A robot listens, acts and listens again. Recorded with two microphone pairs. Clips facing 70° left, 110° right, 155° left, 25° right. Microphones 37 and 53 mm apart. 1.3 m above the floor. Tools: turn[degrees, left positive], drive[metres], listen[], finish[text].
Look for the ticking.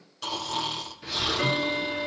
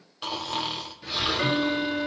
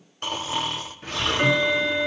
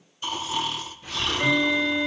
Thought: The ticking: 155° left.
Action: turn[155]
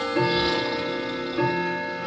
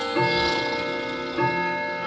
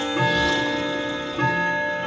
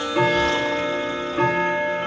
Thought: The ticking is now 20° right.
Action: turn[-20]
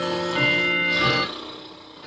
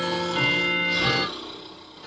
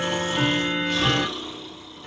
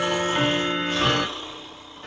Action: finish[Facing the ticking.]